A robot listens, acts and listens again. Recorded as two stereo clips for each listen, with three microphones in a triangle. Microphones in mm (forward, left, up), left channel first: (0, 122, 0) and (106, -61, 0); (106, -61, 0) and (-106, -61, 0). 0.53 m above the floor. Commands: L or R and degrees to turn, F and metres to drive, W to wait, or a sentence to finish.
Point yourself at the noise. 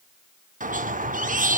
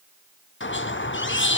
R10
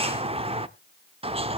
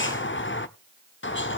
Facing the squeak, under 1 m away.